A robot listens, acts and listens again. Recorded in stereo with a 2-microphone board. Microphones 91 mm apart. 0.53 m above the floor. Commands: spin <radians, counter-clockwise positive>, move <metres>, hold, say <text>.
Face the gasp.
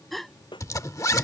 spin 0.52
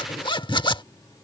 hold
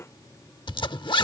say I heard a gasp, but can't make it out now. It was about 30° right or 150° left.